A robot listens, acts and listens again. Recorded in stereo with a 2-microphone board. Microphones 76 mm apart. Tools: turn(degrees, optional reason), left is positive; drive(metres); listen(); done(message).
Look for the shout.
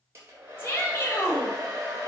turn(degrees=30, reason="The shout: about 30° left or 150° left.")
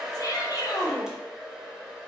turn(degrees=115, reason="So it is at 115° left.")
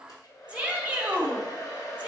turn(degrees=-20, reason="The shout is now 20° right.")
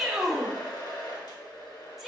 done("Found it: a shout, straight ahead, 1 to 2 m away.")